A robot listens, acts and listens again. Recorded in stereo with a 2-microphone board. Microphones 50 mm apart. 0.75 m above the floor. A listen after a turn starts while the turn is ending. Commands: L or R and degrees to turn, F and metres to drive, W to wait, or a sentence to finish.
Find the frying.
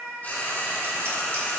L35
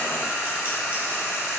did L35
L110
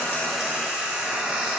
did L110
R25
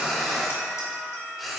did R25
Found it: frying, straight ahead.